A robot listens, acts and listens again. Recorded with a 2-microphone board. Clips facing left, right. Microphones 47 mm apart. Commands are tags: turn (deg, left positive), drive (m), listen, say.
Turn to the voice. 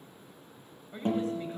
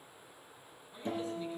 <turn deg="55"/>
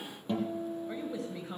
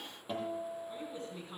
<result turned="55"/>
<turn deg="70"/>
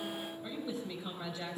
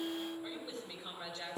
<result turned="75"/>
<say>Facing the woman speaking, over 4 m away.</say>